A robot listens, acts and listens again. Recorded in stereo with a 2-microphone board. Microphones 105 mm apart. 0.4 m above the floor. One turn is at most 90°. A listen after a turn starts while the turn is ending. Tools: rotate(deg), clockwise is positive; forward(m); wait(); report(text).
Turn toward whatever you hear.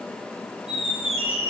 rotate(75)
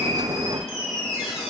report("Facing the squeak, 1 to 2 m away.")